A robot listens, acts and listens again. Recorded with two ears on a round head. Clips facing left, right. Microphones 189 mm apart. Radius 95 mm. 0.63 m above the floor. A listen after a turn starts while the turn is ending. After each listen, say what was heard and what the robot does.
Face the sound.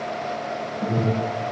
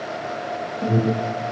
The alarm: about 20° right or 160° right. Turn 20° right.
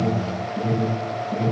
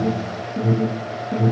So it is at 140° right. Turn 140° right.
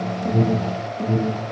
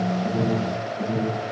The alarm is now 30° left. Turn 30° left.
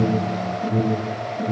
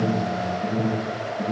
The alarm is now 10° left. Turn 10° left.
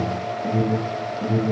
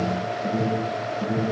Found it: an alarm, straight ahead.